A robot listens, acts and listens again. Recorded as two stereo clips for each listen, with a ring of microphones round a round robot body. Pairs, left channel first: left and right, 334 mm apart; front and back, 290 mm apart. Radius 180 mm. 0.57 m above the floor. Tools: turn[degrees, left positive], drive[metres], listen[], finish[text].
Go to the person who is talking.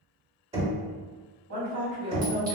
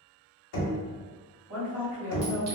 Thought: The woman speaking: 125° right.
Action: turn[-125]
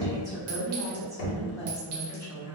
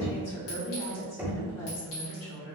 Thought: The woman speaking is now 10° right.
Action: turn[-10]
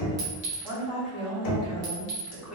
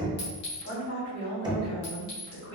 Action: drive[1.0]
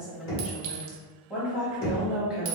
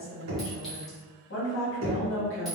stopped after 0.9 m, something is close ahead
Action: finish[I am next to the woman speaking.]